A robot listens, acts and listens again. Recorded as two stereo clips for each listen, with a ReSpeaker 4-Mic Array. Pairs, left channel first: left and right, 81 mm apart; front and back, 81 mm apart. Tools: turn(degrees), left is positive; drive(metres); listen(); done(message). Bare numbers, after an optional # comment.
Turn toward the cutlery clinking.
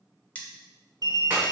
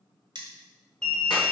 # The cutlery clinking: 160° left.
turn(160)
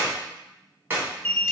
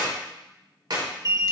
listen()
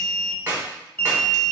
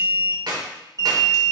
listen()
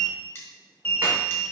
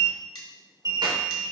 # The cutlery clinking is now 30° left.
turn(30)
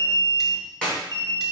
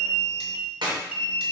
listen()
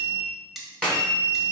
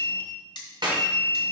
done("Found it: cutlery clinking, straight ahead, 1 to 2 m away.")